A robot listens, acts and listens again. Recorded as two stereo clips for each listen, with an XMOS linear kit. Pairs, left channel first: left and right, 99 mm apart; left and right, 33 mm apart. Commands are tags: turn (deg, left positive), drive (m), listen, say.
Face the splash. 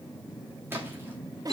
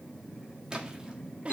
<turn deg="-20"/>
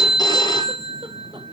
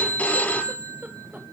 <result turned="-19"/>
<listen/>
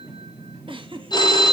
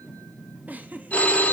<say>I heard a splash, but can't make it out now. It was about 5° right or 140° right.</say>